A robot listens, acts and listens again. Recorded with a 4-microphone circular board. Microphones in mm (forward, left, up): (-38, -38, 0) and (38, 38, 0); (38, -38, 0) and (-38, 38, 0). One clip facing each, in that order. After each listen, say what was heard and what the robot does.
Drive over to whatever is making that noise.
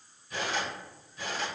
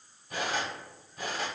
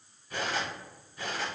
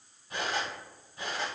The cutlery clinking: 70° left. Turn 70° left.
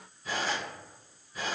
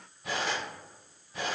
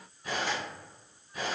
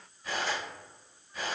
The cutlery clinking is now 30° left. Turn 30° left.
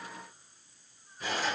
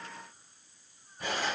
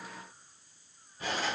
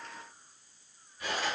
The cutlery clinking is now 10° left. Turn 10° left.
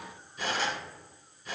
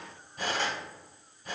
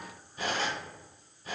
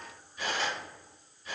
Drive 1.0 m forward.
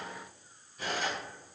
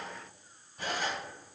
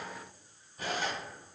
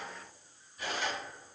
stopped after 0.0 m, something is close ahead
Something is in my way. I am facing the cutlery clinking but have not reached it.